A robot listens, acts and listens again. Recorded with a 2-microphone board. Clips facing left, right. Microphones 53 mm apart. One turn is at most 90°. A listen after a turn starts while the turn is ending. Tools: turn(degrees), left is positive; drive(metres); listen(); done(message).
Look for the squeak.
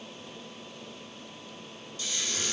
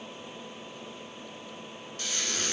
turn(degrees=-55)
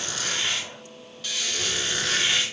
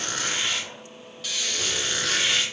done("Found it: a squeak, straight ahead, under 1 m away.")